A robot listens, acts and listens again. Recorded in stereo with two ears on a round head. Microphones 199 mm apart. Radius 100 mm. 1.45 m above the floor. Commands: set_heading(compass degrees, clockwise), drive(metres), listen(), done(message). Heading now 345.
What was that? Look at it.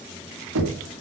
set_heading(60)
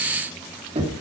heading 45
set_heading(75)
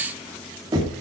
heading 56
set_heading(76)
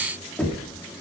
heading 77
done("Found it: knocking, straight ahead, 2 to 4 m away.")